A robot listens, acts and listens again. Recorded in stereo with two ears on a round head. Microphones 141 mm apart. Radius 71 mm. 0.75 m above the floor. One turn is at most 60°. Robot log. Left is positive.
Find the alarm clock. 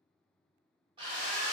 cmd idle
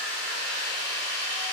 cmd idle
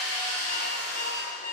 note: The alarm clock: about 50° left or 130° left.
cmd yaw +50
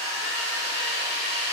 cmd idle
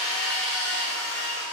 cmd idle
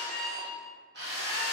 end: Found it: an alarm clock, straight ahead.